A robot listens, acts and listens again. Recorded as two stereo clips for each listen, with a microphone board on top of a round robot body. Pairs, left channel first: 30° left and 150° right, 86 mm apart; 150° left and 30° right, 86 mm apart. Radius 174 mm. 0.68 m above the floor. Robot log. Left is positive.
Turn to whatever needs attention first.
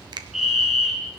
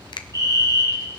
note: The fire alarm: 65° right.
cmd yaw -65
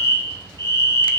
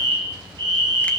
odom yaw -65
note: The fire alarm is now 20° right.
cmd yaw -20
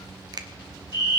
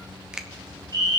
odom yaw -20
end: Found it: a fire alarm, straight ahead.